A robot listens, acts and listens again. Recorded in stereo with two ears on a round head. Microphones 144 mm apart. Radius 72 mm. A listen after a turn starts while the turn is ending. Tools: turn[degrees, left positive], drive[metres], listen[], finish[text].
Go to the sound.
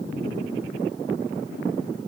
Action: listen[]
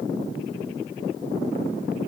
Action: listen[]
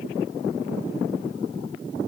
Action: finish[I can't make out anything.]